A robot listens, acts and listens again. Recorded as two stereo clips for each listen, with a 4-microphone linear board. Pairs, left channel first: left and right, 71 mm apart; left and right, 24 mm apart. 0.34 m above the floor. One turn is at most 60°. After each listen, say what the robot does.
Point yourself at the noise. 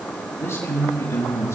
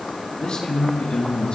Turn 40° left.
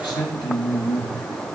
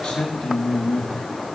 Turn 60° left.
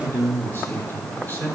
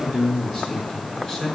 Turn 25° left.
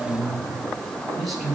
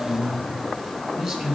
Found it: a man speaking, straight ahead.